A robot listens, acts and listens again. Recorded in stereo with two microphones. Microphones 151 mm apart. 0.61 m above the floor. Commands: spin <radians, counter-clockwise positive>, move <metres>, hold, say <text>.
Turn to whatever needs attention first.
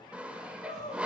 spin 0.79
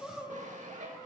say Found it: crying, straight ahead.